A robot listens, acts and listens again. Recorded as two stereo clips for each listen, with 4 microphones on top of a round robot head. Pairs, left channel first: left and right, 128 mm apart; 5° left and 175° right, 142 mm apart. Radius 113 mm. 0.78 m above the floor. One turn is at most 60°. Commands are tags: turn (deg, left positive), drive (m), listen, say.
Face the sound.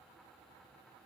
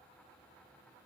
<listen/>
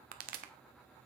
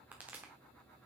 <turn deg="-60"/>
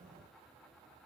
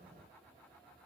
<turn deg="-35"/>
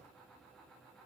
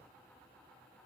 <say>Facing where the pop came from. I can't hear it now.</say>